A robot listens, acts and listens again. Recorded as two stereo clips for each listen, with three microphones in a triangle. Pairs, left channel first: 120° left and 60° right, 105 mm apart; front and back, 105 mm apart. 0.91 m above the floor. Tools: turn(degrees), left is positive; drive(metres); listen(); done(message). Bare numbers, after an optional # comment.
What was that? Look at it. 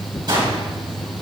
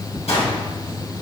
# The gunshot: 15° right.
turn(-15)
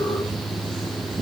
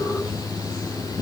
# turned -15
done("I heard a gunshot from this way, but can't make it out now.")